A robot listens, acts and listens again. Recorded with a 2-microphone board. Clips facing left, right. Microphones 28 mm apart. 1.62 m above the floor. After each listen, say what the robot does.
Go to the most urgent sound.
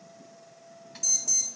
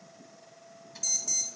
Turn 30° right.
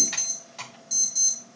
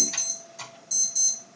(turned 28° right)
Turn 20° left.
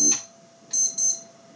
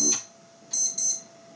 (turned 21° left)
Drive 1.0 m forward.
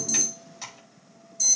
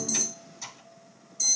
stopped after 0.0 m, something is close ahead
Something is in my way. I am facing the alarm but have not reached it.